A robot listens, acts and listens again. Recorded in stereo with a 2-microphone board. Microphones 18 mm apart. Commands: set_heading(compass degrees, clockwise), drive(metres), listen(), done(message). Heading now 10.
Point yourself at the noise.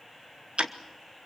set_heading(100)
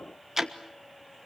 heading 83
set_heading(103)
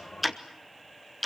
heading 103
done("Found it: ticking, straight ahead.")